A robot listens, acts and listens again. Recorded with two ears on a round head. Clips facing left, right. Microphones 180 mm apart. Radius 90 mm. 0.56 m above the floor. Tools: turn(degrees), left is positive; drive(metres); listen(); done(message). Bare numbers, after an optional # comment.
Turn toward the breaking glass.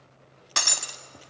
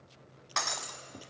# The breaking glass: about 40° left or 140° left.
turn(40)
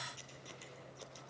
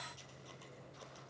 listen()
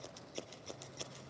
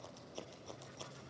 done("I heard breaking glass, but can't make it out now. It was about straight ahead or 100° left.")